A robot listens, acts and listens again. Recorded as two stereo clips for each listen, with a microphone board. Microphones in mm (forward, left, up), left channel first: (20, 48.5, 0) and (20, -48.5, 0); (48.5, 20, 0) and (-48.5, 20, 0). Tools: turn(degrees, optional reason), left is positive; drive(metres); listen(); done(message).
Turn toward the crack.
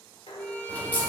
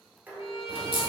turn(degrees=165, reason="The crack: 165° left.")
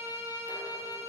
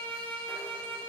done("I heard a crack from this way, but can't make it out now.")